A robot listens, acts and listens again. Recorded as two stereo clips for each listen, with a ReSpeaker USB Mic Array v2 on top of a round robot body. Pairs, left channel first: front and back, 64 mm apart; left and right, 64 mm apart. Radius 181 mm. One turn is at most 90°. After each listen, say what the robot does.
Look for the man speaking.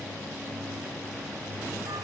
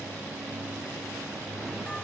Keep listening.
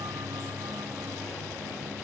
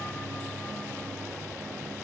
Keep listening.
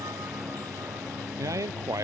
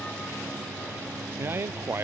Turn 90° right.
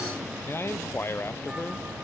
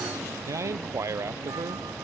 Turn 50° right.
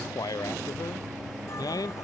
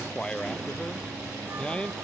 Turn 15° left.
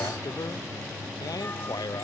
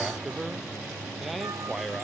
Found it: a man speaking, straight ahead.